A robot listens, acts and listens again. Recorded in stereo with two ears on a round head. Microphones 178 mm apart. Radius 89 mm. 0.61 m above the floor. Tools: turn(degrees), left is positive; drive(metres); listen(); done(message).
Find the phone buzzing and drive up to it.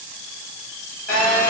turn(degrees=40)
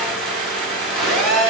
drive(metres=1.0)
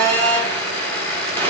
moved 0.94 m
turn(degrees=10)
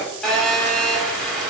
drive(metres=1.0)
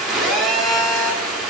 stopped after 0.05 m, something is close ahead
done("I am next to the phone buzzing.")